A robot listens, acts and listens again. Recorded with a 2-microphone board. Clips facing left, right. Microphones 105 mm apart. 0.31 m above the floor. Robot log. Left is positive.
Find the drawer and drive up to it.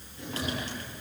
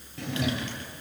note: The drawer: about 75° right or 105° right.
cmd yaw -75
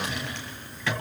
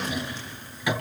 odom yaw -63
note: So it is at 15° right.
cmd yaw -15
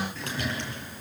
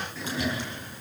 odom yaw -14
cmd fwd 1.0
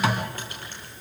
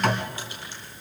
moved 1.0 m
cmd fwd 1.0
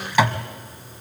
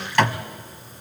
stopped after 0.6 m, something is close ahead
note: The drawer is now 10° left.
cmd yaw +10
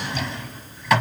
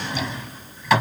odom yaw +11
end: Arrived at the drawer, straight ahead.